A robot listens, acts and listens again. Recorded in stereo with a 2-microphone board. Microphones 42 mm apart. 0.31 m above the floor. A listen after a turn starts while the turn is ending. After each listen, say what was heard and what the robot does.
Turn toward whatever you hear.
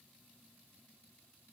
Keep listening.
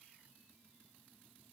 Keep listening.
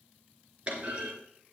The clunk: about 25° right or 155° right. Turn 25° right.
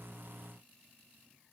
Keep listening.
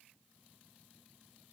I heard a clunk, but can't make it out now. It was about straight ahead or 130° right.